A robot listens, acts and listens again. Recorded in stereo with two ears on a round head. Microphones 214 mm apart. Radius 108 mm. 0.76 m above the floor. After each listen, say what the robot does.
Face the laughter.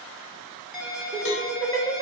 Turn 35° right.
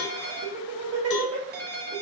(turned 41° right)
Turn 110° right.
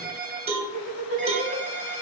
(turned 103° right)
Facing the laughter, 2 to 4 m away.